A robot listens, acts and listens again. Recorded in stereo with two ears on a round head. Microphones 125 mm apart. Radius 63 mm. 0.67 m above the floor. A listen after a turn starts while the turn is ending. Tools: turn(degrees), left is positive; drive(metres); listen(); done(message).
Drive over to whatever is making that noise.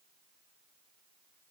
listen()
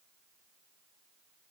listen()
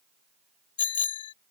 turn(degrees=40)
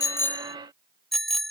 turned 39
drive(metres=1.0)
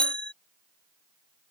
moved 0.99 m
turn(degrees=10)
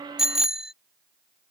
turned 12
drive(metres=1.0)
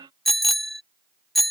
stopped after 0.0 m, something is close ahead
done("I am next to the bicycle bell.")